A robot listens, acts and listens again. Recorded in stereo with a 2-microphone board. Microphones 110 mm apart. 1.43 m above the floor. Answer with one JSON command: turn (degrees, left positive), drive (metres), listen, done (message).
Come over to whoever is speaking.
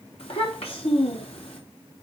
{"turn": 65}
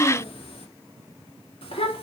{"turn": 55}
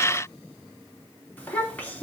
{"turn": 15}
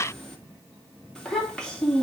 {"drive": 1.0}
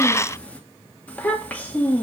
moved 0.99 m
{"turn": 15}
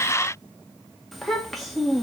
{"drive": 1.0}
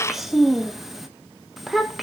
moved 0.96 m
{"drive": 1.0}
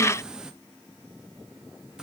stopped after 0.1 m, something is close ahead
{"done": "Arrived at the child speaking, straight ahead."}